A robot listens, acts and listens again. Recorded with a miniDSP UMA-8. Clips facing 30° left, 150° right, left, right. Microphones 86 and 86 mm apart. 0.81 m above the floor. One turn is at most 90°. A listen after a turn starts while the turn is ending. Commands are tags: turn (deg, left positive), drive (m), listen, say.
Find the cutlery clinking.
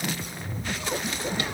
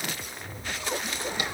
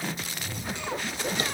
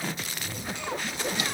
<listen/>
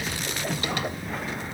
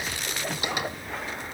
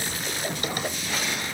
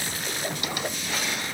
<listen/>
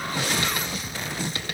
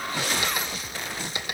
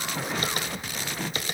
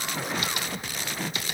<say>I can't make out cutlery clinking.</say>